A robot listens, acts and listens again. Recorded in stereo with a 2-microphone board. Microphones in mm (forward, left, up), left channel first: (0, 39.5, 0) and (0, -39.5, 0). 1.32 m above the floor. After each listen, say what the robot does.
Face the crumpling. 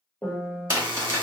Turn 35° right.
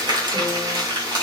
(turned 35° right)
Turn 105° right.
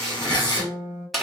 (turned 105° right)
Found it: crumpling, straight ahead, 1 to 2 m away.